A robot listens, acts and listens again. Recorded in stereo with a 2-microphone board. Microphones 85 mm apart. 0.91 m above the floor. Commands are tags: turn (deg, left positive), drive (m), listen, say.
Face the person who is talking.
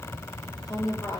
<turn deg="50"/>
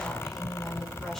<listen/>
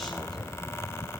<listen/>
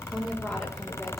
<say>I heard a woman speaking, but can't make it out now. It was about straight ahead or 80° left.</say>